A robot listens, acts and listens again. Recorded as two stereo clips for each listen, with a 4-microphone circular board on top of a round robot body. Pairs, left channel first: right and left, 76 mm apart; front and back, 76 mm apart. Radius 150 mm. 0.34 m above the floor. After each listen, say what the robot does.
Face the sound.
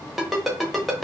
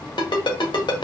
Found it: a ringtone, straight ahead, 1 to 2 m away.